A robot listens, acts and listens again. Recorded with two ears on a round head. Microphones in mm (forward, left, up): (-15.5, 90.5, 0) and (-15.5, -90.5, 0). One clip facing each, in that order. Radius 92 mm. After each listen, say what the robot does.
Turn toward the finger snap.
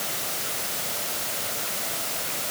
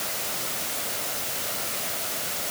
Keep listening.
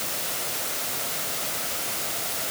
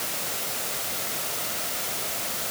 Keep listening.
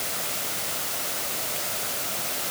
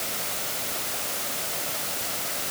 I can't make out a finger snap to turn to.